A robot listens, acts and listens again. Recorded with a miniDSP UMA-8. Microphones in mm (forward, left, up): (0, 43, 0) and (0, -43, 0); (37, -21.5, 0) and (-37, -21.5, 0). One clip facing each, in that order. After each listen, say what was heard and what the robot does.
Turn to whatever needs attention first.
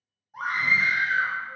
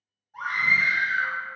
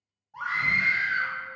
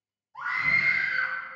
The scream: 15° left. Turn 15° left.
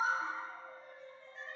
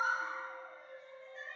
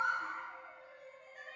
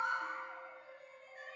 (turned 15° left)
Found it: a scream, straight ahead, 1 to 2 m away.